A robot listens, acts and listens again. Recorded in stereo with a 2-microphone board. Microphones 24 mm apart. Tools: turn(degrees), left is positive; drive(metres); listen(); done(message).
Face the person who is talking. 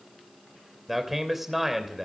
turn(degrees=-30)
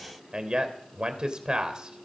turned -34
turn(degrees=-140)
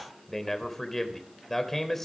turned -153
turn(degrees=10)
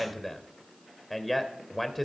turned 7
done("Found it: a man speaking, straight ahead.")